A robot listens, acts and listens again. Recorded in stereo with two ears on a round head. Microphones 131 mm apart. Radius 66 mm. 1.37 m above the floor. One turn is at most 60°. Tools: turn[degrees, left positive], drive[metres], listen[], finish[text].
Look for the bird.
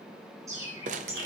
Thought: The bird: about 20° right or 160° right.
Action: turn[-20]
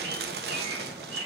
Thought: So it is at 135° right.
Action: turn[-60]
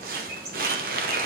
Thought: The bird is now 95° right.
Action: turn[-60]
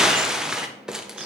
Thought: Nothing new. It was at 35° right.
Action: turn[-35]
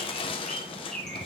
Action: finish[Facing the bird.]